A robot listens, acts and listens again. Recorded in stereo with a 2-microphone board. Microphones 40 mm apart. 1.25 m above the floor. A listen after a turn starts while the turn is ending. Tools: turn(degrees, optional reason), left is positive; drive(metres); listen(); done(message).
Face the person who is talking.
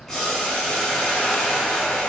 listen()
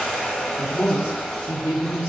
turn(degrees=-30)
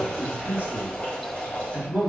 turn(degrees=-140, reason="So it is at 140° right.")
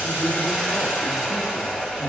listen()
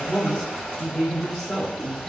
done("Facing the man speaking.")